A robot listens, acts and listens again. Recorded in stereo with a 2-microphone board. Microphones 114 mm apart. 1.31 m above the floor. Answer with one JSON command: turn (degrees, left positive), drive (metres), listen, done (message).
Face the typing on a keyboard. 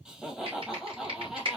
{"turn": -50}
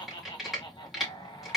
{"done": "Facing the typing on a keyboard."}